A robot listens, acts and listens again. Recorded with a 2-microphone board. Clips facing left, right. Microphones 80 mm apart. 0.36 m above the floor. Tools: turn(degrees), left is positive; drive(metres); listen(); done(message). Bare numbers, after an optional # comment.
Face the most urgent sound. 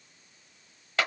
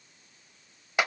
listen()
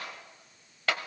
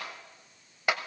listen()
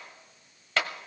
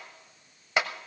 done("I can't make out anything urgent to turn to.")